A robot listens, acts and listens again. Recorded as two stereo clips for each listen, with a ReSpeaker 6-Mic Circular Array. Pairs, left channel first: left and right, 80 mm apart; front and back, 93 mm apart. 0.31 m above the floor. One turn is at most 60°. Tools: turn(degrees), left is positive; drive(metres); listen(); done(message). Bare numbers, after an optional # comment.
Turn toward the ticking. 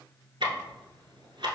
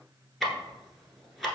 # The ticking: 90° right.
turn(-60)
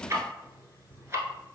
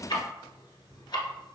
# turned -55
# The ticking is now 35° right.
turn(-35)
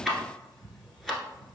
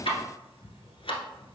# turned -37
done("Facing the ticking.")